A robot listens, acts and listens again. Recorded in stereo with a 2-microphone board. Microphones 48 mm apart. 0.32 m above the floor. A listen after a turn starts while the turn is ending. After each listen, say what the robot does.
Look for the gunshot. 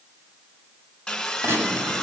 Turn 60° right.
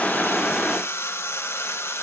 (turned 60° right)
Keep listening.
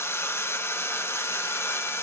I heard a gunshot, but can't make it out now. It was about straight ahead or 60° right.